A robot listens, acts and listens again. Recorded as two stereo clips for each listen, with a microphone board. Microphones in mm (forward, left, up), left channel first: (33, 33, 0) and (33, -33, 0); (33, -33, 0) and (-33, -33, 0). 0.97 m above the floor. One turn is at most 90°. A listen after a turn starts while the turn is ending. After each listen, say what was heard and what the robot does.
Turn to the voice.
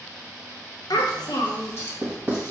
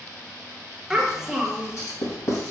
The child speaking: 100° left. Turn 90° left.
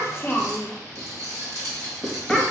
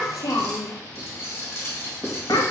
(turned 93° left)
Facing the child speaking, under 1 m away.